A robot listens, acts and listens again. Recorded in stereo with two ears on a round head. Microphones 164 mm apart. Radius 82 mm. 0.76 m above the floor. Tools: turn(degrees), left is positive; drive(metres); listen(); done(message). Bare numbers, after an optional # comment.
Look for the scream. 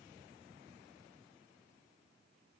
listen()
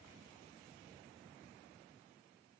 listen()
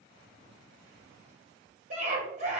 # The scream: about 40° right or 140° right.
turn(-40)
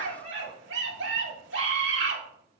# So it is at 100° right.
turn(-100)
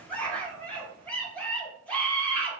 # The scream is now 10° left.
turn(10)
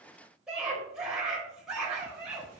done("Facing the scream.")